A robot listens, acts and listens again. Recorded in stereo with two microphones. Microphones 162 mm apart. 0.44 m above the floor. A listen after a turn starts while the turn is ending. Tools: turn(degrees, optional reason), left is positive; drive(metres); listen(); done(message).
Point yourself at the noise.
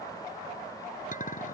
turn(degrees=55, reason="The clink: about 55° left or 125° left.")
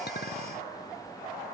listen()
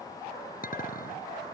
turn(degrees=65, reason="So it is at 65° left.")
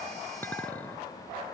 turn(degrees=10, reason="The clink is now 10° left.")
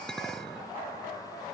listen()
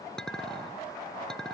done("Found it: a clink, straight ahead.")